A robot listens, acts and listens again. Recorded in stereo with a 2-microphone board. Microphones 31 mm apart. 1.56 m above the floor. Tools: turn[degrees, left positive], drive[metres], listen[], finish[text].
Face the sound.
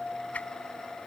Thought: The whoosh: about 50° left or 130° left.
Action: turn[50]
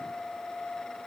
Action: listen[]
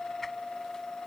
Action: listen[]
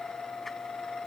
Action: finish[I heard a whoosh, but can't make it out now. It was about straight ahead or 80° left.]